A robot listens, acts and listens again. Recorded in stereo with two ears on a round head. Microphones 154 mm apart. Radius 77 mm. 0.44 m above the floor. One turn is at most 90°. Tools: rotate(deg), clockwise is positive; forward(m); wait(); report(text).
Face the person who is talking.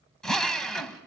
wait()
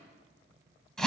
wait()
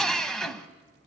report("I can't make out anyone speaking, only a drill.")